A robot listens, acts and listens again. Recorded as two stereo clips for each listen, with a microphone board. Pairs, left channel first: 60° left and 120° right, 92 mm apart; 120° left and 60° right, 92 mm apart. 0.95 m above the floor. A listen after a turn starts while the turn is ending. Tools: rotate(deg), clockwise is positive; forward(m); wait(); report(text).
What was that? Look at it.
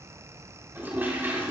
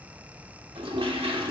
rotate(55)
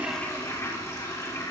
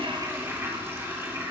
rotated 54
report("Found it: a toilet flushing, straight ahead, 2 to 4 m away.")